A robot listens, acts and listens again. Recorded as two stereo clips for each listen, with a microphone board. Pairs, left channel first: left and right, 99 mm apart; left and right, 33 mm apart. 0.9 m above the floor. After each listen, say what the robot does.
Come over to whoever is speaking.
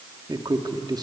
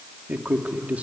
Turn 45° right.
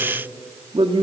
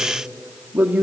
Turn 85° right.
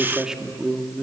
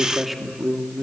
Turn 10° right.
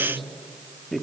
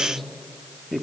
Drive 1.0 m forward.
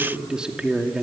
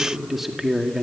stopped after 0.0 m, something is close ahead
Turn 10° right.
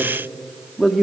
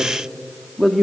Something is in my way. I am facing the man speaking but have not reached it.